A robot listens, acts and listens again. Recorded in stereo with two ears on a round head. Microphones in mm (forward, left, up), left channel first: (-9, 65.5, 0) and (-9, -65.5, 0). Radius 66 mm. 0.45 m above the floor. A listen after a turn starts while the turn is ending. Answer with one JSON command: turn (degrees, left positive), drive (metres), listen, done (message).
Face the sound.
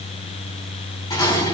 {"turn": 25}
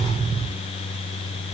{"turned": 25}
{"listen": true}
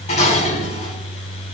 {"turn": 130}
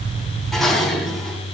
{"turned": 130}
{"done": "Facing the dishes clattering, 2 to 4 m away."}